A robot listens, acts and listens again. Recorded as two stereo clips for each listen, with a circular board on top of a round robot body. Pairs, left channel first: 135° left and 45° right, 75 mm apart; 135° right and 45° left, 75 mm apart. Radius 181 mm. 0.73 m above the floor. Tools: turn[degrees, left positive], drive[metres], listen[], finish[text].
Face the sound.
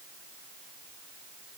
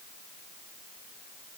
Action: listen[]
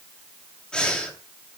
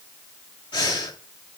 Thought: The breathing: 145° right.
Action: turn[-145]
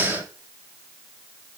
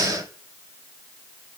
Thought: The breathing is now 15° left.
Action: turn[15]
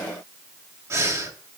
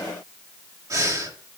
Action: finish[Facing the breathing.]